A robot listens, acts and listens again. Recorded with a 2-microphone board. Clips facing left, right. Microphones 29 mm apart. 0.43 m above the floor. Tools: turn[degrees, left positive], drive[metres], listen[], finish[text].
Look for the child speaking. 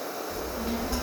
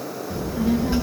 Thought: The child speaking: about 30° right or 150° right.
Action: turn[-30]
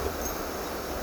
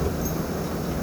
Action: finish[Found it: a child speaking, straight ahead, 2 to 4 m away.]